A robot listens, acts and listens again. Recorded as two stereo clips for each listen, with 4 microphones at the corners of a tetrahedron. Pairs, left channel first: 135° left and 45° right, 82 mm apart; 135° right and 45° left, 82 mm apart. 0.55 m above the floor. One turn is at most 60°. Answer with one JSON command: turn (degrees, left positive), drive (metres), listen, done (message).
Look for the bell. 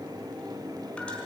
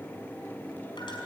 {"listen": true}
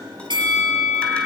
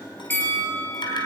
{"turn": -60}
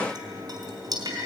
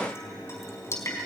{"turn": -10}
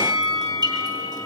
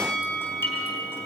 {"done": "Facing the bell, over 4 m away."}